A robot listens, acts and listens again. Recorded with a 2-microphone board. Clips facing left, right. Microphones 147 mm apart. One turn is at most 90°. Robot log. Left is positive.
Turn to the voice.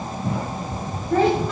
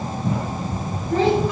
note: The child speaking: about 55° left or 125° left.
cmd yaw +55
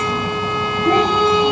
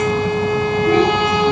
cmd idle
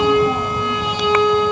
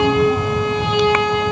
cmd idle
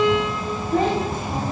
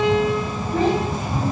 note: So it is at 60° left.
cmd yaw +60
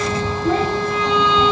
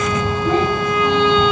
end: Facing the child speaking, 2 to 4 m away.